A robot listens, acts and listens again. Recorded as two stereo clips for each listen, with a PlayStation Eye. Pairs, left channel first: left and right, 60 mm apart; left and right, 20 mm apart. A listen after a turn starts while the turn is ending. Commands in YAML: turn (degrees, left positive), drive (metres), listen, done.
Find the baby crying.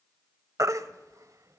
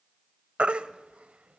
turn: -65
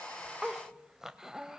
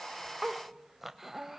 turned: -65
listen: true
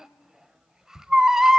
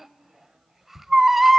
turn: -10
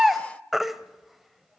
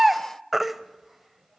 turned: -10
done: "Found it: a baby crying, straight ahead."